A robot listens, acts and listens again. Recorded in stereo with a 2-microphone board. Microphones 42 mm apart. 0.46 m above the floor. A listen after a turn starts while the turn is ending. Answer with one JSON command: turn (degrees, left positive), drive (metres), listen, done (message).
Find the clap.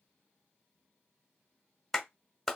{"turn": 30}
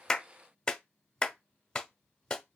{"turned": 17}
{"turn": 165}
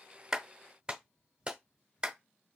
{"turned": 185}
{"turn": -25}
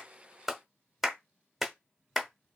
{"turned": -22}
{"done": "Found it: a clap, straight ahead, under 1 m away."}